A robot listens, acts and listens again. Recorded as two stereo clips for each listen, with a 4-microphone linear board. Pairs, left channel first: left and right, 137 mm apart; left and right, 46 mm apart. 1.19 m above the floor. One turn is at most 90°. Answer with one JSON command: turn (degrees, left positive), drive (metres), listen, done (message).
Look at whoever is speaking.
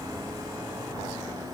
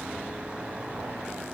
{"listen": true}
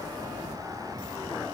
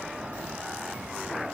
{"listen": true}
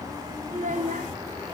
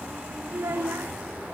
{"turn": -65}
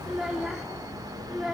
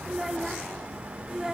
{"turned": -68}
{"done": "Found it: a child speaking, straight ahead."}